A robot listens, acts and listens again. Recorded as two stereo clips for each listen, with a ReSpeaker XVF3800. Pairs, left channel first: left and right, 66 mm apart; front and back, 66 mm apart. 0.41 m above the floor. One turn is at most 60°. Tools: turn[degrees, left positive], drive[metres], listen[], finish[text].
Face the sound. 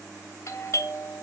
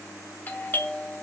Thought: The doorbell: 55° left.
Action: turn[55]
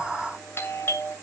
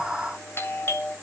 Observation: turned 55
Thought: The doorbell is now 40° left.
Action: turn[40]
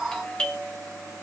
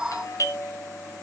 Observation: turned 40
Thought: The doorbell is now 15° left.
Action: turn[15]
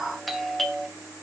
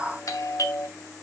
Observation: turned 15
Action: finish[Found it: a doorbell, straight ahead.]